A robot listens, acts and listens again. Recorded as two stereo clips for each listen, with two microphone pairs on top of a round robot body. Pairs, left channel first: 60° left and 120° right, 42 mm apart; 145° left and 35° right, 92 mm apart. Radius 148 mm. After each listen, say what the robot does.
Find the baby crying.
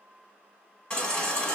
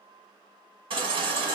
Found it: a baby crying, straight ahead.